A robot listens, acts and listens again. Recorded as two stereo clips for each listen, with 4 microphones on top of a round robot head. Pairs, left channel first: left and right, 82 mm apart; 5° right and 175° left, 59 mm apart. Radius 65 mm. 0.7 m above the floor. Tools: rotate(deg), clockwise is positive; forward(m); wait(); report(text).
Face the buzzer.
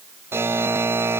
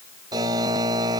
rotate(150)
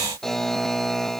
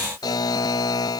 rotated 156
report("Found it: a buzzer, straight ahead.")